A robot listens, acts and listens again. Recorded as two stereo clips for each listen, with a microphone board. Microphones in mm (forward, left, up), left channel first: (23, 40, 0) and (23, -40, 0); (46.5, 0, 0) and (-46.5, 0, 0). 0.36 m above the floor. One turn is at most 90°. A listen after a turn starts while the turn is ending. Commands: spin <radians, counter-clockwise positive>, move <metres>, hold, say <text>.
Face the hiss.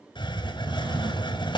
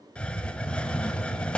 spin 1.40
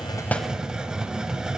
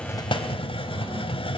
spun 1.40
spin -0.17
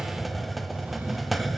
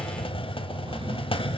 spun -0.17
say Found it: a hiss, straight ahead, under 1 m away.